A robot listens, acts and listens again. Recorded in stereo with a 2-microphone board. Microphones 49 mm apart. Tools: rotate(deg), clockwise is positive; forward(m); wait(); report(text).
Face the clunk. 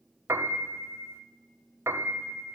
wait()
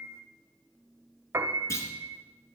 rotate(-75)
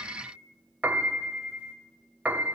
wait()
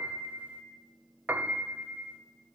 report("I heard a clunk, but can't make it out now. It was about straight ahead or 30° left.")